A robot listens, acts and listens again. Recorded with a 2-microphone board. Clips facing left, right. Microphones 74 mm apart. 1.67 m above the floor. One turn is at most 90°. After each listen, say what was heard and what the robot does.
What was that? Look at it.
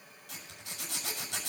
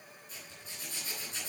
Turn 90° left.
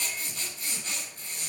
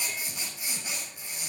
So it is at 10° right. Turn 10° right.
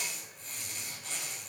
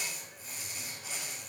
Facing the zipper, over 4 m away.